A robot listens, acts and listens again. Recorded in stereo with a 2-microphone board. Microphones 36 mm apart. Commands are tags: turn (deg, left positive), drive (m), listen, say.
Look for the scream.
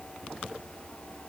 <listen/>
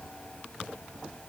<listen/>
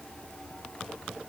<say>I can't make out a scream.</say>